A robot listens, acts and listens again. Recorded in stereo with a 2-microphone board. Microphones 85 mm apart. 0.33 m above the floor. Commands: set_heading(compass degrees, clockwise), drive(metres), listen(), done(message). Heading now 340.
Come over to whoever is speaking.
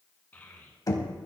set_heading(320)
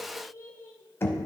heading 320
set_heading(180)
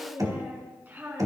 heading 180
set_heading(200)
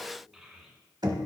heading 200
drive(1.0)
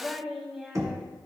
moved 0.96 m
drive(1.0)
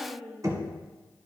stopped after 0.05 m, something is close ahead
done("I am next to the child speaking.")